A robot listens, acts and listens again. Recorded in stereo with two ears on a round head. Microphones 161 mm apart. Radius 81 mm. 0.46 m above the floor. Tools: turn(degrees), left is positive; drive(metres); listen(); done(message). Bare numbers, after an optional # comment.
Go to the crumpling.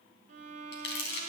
# The crumpling: about 65° left or 115° left.
turn(65)
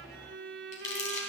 # So it is at 45° left.
turn(45)
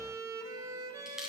drive(1.0)
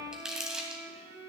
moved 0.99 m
drive(1.0)
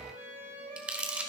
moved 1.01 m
# The crumpling is now 10° right.
turn(-10)
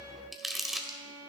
drive(1.0)
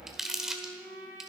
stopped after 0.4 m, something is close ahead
done("I am next to the crumpling.")